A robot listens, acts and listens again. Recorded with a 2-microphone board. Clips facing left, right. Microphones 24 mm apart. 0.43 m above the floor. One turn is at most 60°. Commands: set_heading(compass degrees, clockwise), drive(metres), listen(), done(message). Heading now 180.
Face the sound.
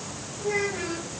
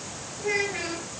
set_heading(230)
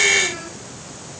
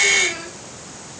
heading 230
listen()
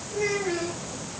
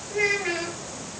set_heading(290)
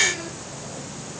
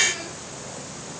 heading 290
set_heading(300)
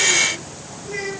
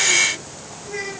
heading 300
set_heading(290)
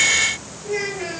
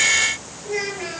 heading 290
done("Found it: a child speaking, straight ahead, over 4 m away.")